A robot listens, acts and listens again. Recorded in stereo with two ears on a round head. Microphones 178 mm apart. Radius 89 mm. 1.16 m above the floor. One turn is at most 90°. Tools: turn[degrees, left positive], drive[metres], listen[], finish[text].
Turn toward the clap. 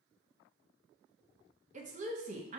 Action: listen[]
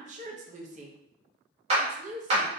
Thought: The clap: about 35° right or 145° right.
Action: turn[-35]
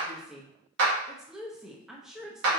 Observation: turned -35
Thought: So it is at 115° right.
Action: turn[-90]
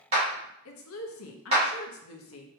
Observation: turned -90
Thought: The clap is now 30° right.
Action: turn[-30]
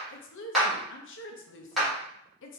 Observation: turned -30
Action: finish[Facing the clap.]